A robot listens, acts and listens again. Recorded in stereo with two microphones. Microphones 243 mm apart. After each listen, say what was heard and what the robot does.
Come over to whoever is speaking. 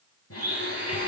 Keep listening.
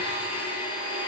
Keep listening.
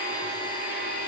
I can't make out anyone speaking, only a blender.